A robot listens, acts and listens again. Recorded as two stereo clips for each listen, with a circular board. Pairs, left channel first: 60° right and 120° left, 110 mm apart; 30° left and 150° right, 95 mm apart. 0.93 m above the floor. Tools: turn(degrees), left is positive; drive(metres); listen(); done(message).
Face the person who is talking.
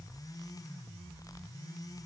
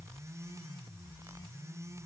listen()
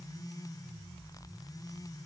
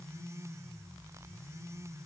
listen()
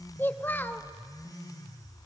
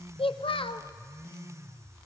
turn(degrees=10)
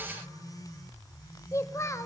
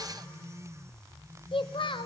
done("Facing the child speaking.")